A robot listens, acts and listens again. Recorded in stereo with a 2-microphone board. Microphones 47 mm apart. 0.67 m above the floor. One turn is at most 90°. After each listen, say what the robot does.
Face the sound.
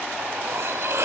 Turn 70° right.
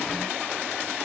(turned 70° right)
Keep listening.
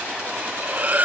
Turn 35° right.
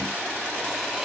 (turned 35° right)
Keep listening.
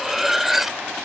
Found it: cutlery clinking, straight ahead.